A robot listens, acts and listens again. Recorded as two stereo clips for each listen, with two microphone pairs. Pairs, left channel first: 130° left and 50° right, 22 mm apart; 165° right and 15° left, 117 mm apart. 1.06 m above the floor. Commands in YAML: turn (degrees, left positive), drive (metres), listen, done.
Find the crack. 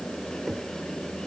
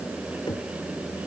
listen: true
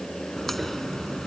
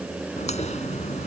turn: -150
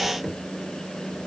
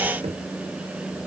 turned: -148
done: "I heard a crack from this way, but can't make it out now."